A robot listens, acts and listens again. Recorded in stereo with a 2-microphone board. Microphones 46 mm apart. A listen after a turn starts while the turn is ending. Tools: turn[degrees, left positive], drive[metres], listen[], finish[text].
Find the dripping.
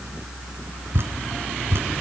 Thought: The dripping: about 60° right or 120° right.
Action: turn[-60]
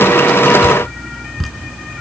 Action: finish[Found it: dripping, straight ahead.]